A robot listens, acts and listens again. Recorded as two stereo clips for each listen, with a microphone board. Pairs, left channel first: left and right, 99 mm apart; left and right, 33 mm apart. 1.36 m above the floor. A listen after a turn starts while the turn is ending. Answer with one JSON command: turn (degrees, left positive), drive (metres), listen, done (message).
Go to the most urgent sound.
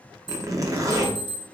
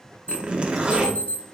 {"turn": 60}
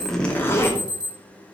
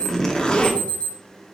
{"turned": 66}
{"turn": 45}
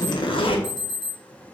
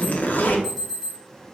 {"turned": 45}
{"drive": 1.0}
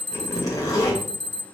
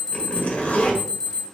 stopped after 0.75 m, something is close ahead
{"done": "Arrived at the alarm, straight ahead."}